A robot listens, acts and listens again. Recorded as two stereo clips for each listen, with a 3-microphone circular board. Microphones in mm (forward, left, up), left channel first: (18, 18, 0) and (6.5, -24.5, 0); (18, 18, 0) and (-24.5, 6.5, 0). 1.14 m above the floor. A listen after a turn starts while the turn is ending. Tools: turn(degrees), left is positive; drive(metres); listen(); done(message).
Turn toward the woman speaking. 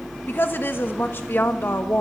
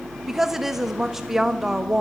turn(degrees=110)
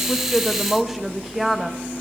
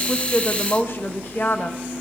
turn(degrees=-20)
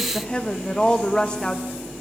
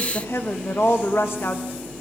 done("Facing the woman speaking.")